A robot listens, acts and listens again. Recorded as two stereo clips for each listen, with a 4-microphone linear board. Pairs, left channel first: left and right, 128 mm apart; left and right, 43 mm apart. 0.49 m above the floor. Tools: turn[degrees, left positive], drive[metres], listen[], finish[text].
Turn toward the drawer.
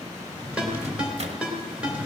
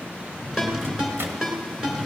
Action: turn[-30]
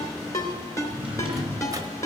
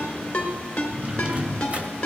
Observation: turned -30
Thought: So it is at 135° right.
Action: turn[-135]
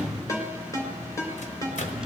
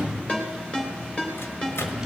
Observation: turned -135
Action: finish[Facing the drawer.]